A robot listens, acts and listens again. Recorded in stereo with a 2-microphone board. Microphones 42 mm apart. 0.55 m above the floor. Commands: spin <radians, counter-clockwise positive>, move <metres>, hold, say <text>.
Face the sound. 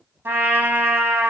spin -1.13
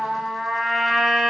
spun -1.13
say Facing the trumpet.